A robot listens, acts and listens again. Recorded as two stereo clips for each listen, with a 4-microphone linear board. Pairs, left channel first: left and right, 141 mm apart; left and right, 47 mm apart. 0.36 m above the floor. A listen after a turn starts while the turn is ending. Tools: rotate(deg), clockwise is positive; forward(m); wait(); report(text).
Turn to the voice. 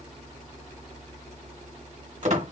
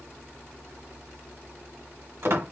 wait()
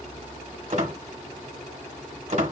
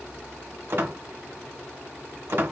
wait()
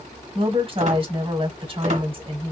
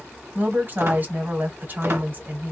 rotate(40)
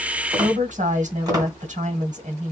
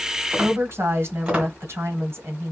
rotate(90)
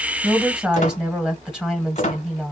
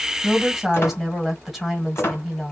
report("Found it: a woman speaking, straight ahead, 1 to 2 m away.")